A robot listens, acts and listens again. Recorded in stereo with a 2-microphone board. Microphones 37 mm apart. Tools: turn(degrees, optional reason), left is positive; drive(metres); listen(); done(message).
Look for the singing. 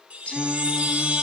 turn(degrees=30, reason="The singing: about 30° left or 150° left.")
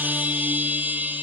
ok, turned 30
listen()
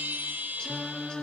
turn(degrees=25, reason="The singing: about 25° left or 155° left.")
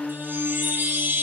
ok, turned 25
turn(degrees=135, reason="So it is at 135° left.")
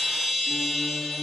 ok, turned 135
listen()
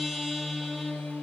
turn(degrees=60, reason="The singing is now 60° left.")
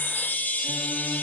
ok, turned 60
listen()
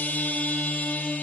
turn(degrees=-15, reason="The singing is now 15° right.")
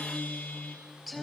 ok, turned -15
done("Facing the singing, over 4 m away.")